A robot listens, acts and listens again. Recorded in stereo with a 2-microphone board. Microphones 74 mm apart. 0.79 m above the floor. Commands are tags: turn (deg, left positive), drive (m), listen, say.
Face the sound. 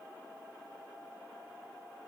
<listen/>
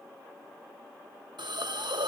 <turn deg="-90"/>
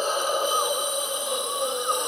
<say>Facing the hiss.</say>